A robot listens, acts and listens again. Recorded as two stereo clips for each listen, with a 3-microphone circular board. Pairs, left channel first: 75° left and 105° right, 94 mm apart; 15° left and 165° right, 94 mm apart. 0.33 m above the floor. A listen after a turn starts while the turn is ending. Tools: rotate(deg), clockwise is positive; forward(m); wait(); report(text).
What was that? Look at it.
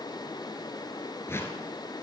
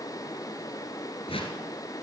rotate(-10)
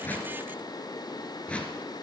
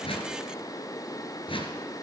report("Found it: a whoosh, straight ahead.")